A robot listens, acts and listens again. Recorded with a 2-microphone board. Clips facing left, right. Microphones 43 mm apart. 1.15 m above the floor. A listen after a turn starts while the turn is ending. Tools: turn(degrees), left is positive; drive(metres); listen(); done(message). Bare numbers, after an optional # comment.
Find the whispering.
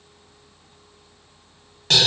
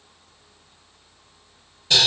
listen()
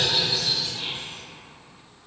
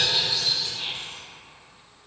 # The whispering: about 50° left or 130° left.
turn(50)
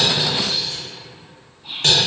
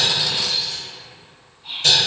done("Found it: whispering, straight ahead, 1 to 2 m away.")